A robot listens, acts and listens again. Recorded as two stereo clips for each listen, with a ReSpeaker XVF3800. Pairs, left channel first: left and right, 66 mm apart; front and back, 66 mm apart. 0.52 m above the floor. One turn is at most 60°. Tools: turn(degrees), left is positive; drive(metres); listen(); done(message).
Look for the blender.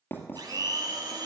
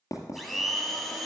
turn(degrees=-60)
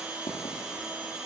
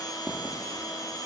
turn(degrees=-15)
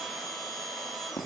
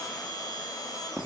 done("Found it: a blender, straight ahead.")